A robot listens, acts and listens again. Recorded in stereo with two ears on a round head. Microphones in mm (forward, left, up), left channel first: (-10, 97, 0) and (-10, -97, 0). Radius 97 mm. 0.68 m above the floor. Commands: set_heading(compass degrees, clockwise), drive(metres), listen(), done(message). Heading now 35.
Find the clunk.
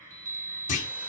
set_heading(0)
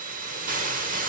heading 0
listen()
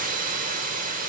done("I heard a clunk, but can't make it out now. It was about straight ahead or 110° left.")